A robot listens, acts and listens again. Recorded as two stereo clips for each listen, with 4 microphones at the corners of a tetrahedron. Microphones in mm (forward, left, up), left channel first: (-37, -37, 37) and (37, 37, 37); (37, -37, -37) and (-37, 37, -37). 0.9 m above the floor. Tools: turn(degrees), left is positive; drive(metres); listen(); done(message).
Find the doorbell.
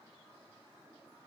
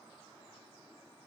listen()
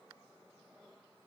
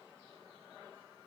listen()
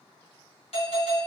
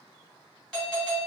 turn(degrees=-125)
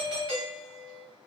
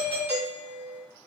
turn(degrees=-35)
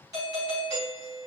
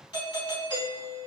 done("Facing the doorbell, 1 to 2 m away.")